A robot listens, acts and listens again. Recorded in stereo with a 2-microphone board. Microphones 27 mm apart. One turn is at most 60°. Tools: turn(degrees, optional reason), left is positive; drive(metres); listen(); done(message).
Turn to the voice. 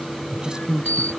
turn(degrees=-30, reason="The woman speaking: about 30° right or 150° right.")
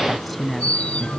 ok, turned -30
done("Found it: a woman speaking, straight ahead.")